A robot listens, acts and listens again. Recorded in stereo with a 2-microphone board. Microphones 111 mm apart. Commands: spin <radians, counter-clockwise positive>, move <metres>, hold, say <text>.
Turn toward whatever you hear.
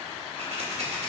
spin -1.22
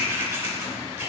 spin -0.35
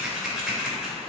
say Found it: scissors, straight ahead, 2 to 4 m away.